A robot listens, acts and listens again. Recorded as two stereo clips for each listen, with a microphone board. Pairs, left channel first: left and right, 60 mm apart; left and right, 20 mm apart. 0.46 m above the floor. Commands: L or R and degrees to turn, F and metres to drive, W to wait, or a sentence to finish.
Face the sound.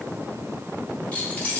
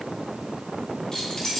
L25
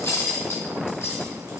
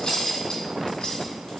L130
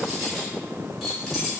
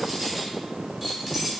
Found it: keys jangling, straight ahead, over 4 m away.